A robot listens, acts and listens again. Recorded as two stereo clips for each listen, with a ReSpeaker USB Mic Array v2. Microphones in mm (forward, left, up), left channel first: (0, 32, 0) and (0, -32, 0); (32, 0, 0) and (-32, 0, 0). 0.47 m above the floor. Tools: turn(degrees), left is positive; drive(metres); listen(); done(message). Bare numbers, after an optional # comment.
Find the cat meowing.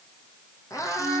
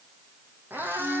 # The cat meowing: 120° left.
turn(120)
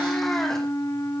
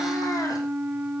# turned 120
listen()
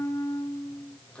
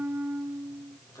# The cat meowing is now 15° left.
turn(15)
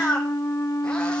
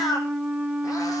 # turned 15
# The cat meowing is now 10° left.
turn(10)
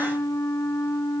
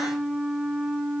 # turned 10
listen()
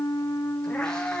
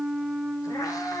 # The cat meowing is now 10° left.
turn(10)
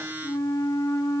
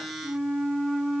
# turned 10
listen()
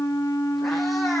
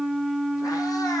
listen()
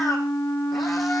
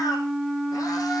done("I heard a cat meowing from this way, but can't make it out now.")